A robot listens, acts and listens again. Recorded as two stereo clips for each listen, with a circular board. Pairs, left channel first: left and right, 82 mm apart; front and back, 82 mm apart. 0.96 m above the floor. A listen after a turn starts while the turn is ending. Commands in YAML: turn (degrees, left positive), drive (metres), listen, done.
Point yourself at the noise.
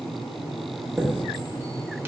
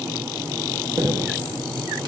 turn: -150
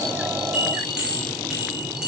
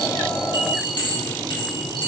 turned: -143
turn: -10
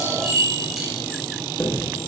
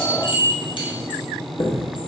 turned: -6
done: "Facing the chime."